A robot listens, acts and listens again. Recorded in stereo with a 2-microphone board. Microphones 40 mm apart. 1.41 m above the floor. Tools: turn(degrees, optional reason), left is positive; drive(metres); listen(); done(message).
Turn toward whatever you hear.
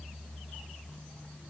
listen()
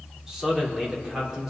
turn(degrees=-30)
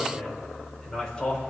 turn(degrees=15, reason="So it is at 15° left.")
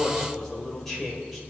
done("Found it: a man speaking, straight ahead, over 4 m away.")